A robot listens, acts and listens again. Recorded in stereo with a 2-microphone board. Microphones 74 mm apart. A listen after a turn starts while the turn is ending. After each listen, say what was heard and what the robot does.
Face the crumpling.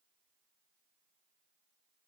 Keep listening.
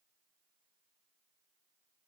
Keep listening.
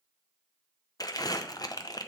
The crumpling: about 55° left or 125° left. Turn 55° left.
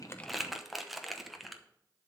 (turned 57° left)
Facing the crumpling, under 1 m away.